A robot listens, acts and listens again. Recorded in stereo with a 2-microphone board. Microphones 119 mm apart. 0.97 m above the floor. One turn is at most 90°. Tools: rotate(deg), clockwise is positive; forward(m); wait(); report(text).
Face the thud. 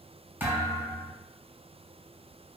rotate(20)
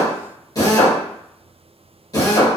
wait()
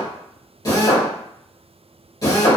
report("I heard a thud, but can't make it out now. It was about straight ahead or 140° right.")